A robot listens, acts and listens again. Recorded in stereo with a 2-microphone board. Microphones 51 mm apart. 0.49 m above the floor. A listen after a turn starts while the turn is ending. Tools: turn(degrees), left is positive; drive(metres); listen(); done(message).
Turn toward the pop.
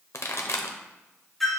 turn(degrees=65)
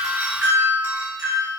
listen()
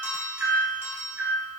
done("I heard a pop, but can't make it out now. It was about straight ahead or 50° left.")